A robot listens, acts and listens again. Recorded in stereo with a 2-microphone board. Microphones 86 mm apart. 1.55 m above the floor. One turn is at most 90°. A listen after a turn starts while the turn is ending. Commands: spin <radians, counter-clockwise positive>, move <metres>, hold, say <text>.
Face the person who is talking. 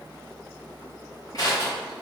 hold
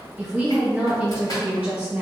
spin -0.26
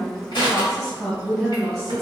say Found it: a woman speaking, straight ahead, 1 to 2 m away.